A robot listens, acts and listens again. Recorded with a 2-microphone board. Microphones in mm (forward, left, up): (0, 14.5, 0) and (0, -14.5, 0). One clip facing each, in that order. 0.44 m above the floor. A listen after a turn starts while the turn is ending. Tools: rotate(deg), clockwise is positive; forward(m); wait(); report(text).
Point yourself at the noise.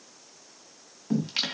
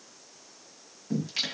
rotate(-30)
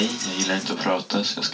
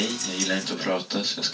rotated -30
rotate(-120)
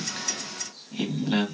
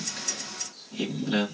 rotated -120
rotate(-35)
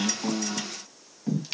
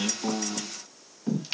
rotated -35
report("Found it: singing, straight ahead, 1 to 2 m away.")